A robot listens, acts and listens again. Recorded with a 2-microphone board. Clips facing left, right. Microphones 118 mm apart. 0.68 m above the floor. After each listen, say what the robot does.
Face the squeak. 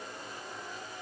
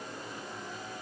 Keep listening.
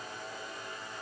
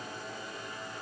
Keep listening.
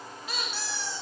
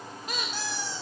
Turn 45° right.
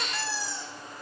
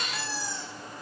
Found it: a squeak, straight ahead.